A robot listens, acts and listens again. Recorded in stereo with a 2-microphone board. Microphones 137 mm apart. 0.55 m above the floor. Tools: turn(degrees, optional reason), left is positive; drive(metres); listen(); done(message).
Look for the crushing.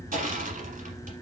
turn(degrees=-90)
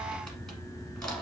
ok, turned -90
done("Found it: crushing, straight ahead.")